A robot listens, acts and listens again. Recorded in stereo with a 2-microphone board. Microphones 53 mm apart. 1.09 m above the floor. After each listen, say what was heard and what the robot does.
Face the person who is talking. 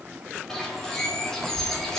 The child speaking: about 55° right or 125° right. Turn 55° right.
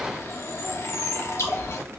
So it is at 65° right. Turn 65° right.
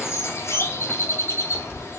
The child speaking is now 20° right. Turn 20° right.
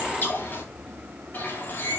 Keep listening.
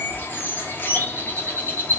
Facing the child speaking, 1 to 2 m away.